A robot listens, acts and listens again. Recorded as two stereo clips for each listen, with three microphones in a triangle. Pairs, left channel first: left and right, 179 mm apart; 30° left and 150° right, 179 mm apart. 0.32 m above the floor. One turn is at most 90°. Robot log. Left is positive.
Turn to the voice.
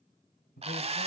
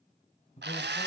note: The man speaking: 75° left.
cmd yaw +75
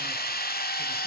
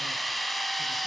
cmd idle
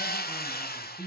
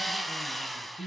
end: Found it: a man speaking, straight ahead.